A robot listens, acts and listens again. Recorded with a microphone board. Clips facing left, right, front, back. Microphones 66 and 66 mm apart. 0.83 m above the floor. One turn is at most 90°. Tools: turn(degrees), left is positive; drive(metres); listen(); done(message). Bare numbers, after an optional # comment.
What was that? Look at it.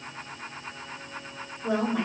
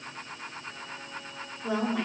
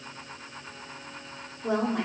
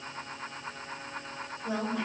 done("Facing the woman speaking, 2 to 4 m away.")